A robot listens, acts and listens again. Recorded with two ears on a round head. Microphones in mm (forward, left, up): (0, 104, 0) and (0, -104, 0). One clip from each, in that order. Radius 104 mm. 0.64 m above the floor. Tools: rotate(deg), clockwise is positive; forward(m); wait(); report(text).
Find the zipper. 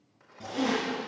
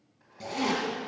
rotate(40)
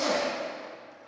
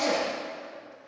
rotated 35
report("Facing the zipper, 2 to 4 m away.")